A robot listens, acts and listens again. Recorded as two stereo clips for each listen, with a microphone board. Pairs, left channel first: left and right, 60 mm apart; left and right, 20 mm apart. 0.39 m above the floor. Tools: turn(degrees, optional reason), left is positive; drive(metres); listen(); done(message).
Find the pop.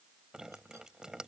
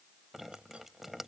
listen()
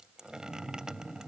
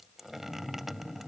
listen()
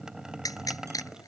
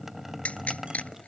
turn(degrees=90)
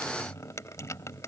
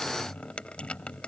done("Facing where the pop came from. I can't hear it now.")